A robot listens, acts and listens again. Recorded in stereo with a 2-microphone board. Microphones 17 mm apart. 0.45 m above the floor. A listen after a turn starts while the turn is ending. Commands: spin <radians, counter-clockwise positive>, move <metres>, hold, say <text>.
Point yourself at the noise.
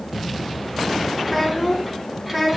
spin -0.52
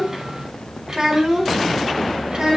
spin -2.27
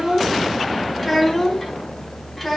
say Facing the child speaking, 2 to 4 m away.